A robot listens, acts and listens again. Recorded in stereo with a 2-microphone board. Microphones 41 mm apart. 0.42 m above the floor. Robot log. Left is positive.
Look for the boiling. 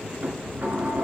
cmd idle
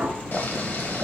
note: The boiling: about 50° left or 130° left.
cmd yaw +50
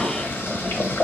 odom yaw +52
note: So it is at 75° left.
cmd yaw +75
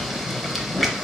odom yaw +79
end: Found it: boiling, straight ahead.